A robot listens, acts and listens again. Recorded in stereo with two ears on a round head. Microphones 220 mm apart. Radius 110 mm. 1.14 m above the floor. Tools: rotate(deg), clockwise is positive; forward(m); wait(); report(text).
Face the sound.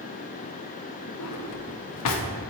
rotate(-70)
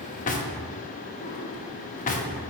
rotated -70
rotate(-35)
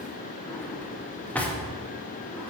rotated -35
report("Found it: a drawer, straight ahead.")